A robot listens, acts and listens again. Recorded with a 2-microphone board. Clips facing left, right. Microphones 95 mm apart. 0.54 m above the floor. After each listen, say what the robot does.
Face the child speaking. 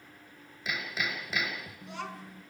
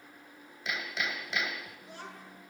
Turn 90° left.
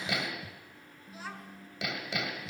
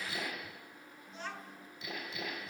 Found it: a child speaking, straight ahead, over 4 m away.